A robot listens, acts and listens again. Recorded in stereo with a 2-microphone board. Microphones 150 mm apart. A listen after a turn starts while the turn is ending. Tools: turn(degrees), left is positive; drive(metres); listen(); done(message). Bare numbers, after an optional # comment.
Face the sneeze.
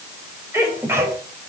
# The sneeze: about 20° right or 160° right.
turn(-20)
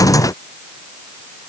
listen()
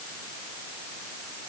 done("I heard a sneeze, but can't make it out now. It was about straight ahead or 140° right.")